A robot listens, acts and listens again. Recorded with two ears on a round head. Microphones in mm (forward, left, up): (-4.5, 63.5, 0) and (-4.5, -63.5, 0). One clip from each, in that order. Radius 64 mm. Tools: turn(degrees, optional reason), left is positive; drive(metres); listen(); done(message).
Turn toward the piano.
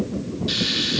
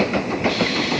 listen()
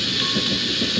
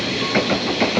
listen()
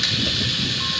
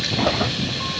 done("I can't make out a piano, only frying.")